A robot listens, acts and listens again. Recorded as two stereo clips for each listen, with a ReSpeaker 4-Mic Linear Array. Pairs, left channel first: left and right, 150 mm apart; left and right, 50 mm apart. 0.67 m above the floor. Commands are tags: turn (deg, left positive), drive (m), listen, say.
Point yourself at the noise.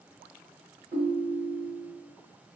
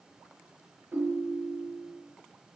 <turn deg="-65"/>
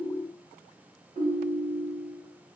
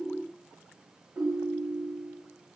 <turn deg="-50"/>
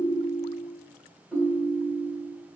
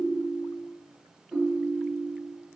<say>Found it: a ringtone, straight ahead.</say>